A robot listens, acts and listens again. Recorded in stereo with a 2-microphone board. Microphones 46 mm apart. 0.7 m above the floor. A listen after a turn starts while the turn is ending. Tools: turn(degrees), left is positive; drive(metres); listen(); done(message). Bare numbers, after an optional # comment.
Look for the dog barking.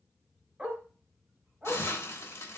# The dog barking: about 25° right or 155° right.
turn(-25)
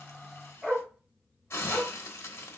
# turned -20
done("Found it: a dog barking, straight ahead, 1 to 2 m away.")